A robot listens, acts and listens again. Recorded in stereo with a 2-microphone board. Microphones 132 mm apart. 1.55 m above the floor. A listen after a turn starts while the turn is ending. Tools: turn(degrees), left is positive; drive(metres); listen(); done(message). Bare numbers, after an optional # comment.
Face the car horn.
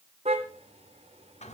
# The car horn: about 55° right or 125° right.
turn(-55)
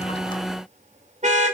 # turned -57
# So it is at 70° right.
turn(-70)
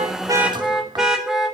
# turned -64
done("Facing the car horn, 2 to 4 m away.")